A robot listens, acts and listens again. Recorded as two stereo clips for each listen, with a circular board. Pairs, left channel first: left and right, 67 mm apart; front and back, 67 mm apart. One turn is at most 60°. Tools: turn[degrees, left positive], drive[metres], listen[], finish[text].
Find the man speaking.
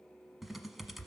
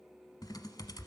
Action: listen[]
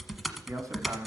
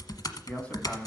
Thought: The man speaking: 70° right.
Action: turn[-60]
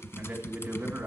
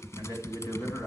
Thought: The man speaking is now 30° right.
Action: turn[-30]
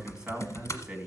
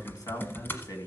Thought: The man speaking is now 15° right.
Action: turn[-15]
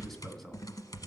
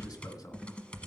Action: finish[Facing the man speaking.]